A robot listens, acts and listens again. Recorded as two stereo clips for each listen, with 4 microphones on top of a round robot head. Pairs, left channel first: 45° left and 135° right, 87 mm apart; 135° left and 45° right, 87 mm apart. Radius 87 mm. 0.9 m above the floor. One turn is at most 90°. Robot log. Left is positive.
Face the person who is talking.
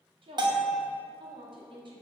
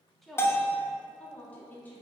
note: The woman speaking: 160° right.
cmd yaw -90
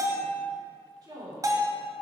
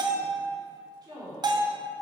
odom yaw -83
note: The woman speaking is now 90° right.
cmd yaw -90
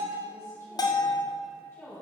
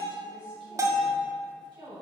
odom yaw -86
note: The woman speaking is now 15° right.
cmd yaw -15
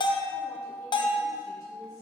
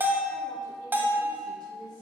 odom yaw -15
cmd idle
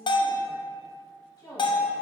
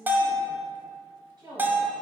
end: Facing the woman speaking.